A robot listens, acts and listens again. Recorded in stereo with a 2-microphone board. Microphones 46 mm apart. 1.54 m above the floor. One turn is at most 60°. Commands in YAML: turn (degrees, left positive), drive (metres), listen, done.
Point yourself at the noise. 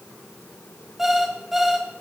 turn: -30
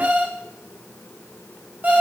turn: -60
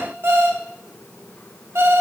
turn: -60
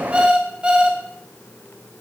turn: -25
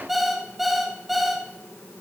done: "Facing the alarm clock."